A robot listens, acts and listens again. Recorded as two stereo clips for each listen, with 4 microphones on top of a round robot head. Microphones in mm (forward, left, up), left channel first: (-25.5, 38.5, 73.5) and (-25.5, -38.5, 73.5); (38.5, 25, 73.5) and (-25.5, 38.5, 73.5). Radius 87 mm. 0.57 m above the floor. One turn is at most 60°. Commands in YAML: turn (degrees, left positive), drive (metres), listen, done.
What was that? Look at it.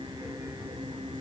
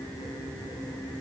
listen: true
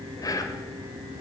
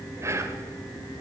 turn: 60
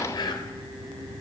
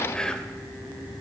turn: 60
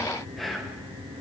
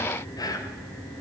done: "Facing the whispering, 2 to 4 m away."